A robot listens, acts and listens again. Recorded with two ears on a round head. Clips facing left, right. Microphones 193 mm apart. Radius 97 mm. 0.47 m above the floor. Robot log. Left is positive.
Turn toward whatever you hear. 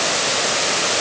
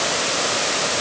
cmd idle
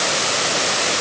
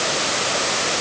cmd idle
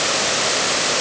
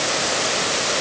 end: I can't make out anything.